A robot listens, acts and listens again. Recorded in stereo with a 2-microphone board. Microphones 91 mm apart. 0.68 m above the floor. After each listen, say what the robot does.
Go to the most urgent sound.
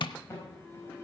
Turn 30° left.
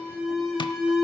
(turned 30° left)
Drive 1.0 m forward.
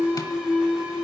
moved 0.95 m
Turn 10° right.
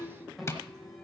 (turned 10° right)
Drive 1.0 m forward.
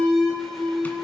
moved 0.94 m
Drive 1.0 m forward.
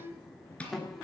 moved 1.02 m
Drive 1.0 m forward.
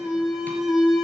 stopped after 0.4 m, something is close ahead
I am next to the alarm.